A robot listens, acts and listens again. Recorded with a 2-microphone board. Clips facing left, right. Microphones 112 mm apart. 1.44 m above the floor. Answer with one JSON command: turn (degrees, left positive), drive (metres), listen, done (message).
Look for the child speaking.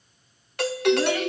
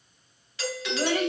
{"turn": -45}
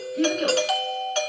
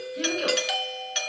{"done": "Facing the child speaking."}